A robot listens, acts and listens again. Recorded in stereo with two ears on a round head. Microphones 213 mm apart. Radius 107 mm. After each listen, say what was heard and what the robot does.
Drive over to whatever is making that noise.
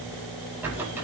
Turn 30° right.
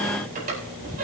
So it is at 140° right. Turn 140° right.
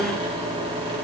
The squeak is now 25° right. Turn 25° right.
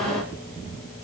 Keep listening.
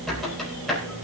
Drive 1.0 m forward.
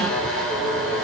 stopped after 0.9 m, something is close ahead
Something is in my way. I am facing the squeak but have not reached it.